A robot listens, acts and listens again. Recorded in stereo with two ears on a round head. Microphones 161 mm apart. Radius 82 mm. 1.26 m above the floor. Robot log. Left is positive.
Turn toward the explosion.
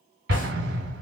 note: The explosion: about 65° right or 115° right.
cmd yaw -65
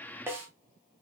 cmd idle
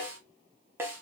end: I heard an explosion, but can't make it out now. It was about straight ahead or 50° right.